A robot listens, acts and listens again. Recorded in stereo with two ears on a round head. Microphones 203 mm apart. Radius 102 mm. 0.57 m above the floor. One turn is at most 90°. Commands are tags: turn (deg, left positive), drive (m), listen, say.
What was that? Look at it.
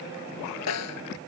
<turn deg="90"/>
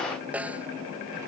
<say>Facing the snare drum.</say>